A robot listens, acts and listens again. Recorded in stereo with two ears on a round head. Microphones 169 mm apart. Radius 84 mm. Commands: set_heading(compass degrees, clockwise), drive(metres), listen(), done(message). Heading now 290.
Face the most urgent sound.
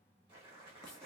listen()
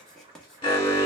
set_heading(260)
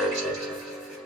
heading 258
done("Facing the alarm, 1 to 2 m away.")